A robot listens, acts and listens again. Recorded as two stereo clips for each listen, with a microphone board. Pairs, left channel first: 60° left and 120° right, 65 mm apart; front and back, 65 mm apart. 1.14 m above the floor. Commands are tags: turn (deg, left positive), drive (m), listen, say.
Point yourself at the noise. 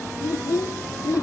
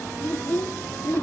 <turn deg="50"/>
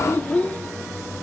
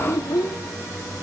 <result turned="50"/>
<turn deg="-10"/>
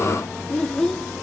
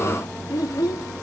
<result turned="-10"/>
<turn deg="-20"/>
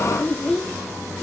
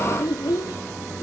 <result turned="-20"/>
<turn deg="-10"/>
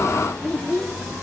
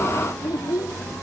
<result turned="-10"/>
<turn deg="-15"/>
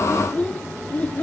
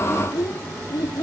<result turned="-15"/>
<say>Found it: a child speaking, straight ahead.</say>